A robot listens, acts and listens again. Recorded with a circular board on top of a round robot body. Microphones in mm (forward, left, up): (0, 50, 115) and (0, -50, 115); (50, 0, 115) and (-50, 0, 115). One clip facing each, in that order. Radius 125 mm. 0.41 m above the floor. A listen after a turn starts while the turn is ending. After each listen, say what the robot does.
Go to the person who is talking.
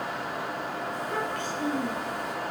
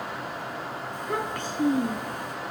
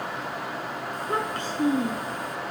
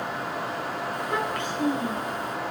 Turn 55° right.
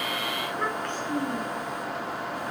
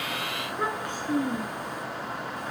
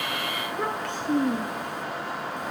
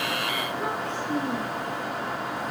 Turn 10° right.
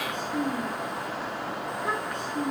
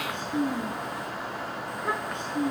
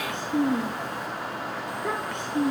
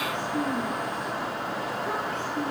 Drive 1.0 m forward.
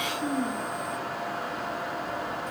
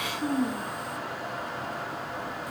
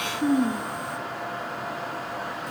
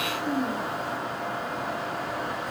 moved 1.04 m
Drive 1.0 m forward.
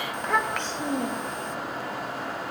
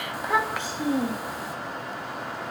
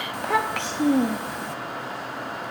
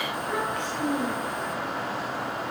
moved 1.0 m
Drive 1.0 m forward.
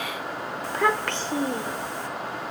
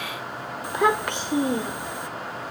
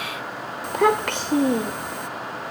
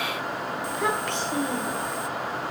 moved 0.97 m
Turn 15° right.
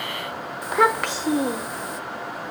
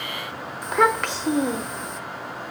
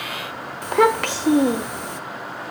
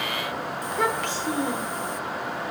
Drive 1.0 m forward.
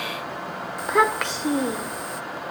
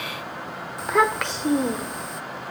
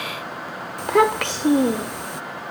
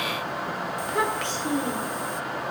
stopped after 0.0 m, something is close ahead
Arrived at the child speaking, straight ahead.